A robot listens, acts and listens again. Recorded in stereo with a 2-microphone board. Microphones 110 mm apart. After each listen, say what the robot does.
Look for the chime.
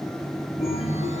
Turn 90° left.
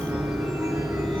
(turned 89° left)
Turn 10° right.
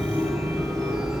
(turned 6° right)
Facing the chime, 2 to 4 m away.